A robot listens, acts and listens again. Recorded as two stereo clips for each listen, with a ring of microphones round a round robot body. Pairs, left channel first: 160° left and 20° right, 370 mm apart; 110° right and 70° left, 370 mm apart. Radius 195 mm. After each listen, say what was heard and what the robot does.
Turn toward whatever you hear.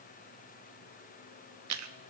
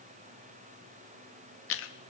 The chewing: 60° right. Turn 60° right.
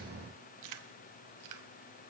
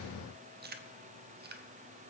Facing the chewing, under 1 m away.